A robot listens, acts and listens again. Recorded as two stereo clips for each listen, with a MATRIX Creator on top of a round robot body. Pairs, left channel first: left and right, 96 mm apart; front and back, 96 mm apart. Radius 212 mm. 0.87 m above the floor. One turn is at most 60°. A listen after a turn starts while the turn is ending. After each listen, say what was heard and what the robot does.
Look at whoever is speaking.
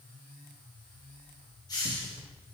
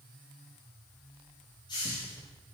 Keep listening.
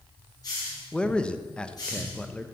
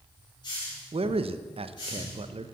The man speaking: 170° left. Turn 60° left.
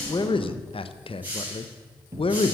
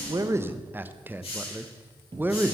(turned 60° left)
The man speaking is now 110° left. Turn 60° left.
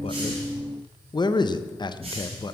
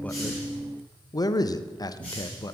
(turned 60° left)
The man speaking is now 50° left. Turn 50° left.
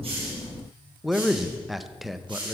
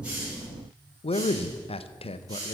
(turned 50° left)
Facing the man speaking.